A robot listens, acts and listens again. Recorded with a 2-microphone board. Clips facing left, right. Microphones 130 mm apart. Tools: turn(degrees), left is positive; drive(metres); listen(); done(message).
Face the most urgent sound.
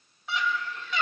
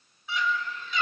turn(degrees=75)
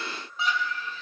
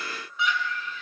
turn(degrees=35)
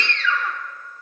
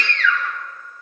turn(degrees=30)
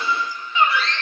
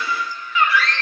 turn(degrees=25)
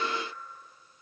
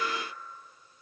listen()
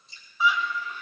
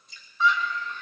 turn(degrees=10)
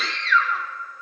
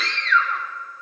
done("Found it: a scream, straight ahead.")